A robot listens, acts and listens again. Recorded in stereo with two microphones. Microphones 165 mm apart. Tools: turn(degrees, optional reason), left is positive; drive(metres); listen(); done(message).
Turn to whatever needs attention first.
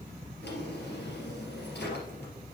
listen()
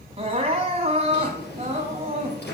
turn(degrees=-35, reason="The crying: about 35° right or 145° right.")
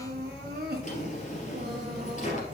turn(degrees=-110, reason="So it is at 110° right.")
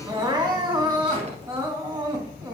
turn(degrees=-25, reason="The crying is now 25° right.")
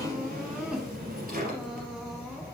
done("Facing the crying.")